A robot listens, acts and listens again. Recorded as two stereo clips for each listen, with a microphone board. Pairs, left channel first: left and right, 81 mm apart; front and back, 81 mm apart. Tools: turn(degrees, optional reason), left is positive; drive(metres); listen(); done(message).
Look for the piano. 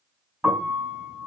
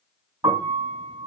turn(degrees=-155, reason="The piano: 155° right.")
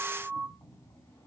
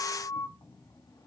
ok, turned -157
done("Facing the piano.")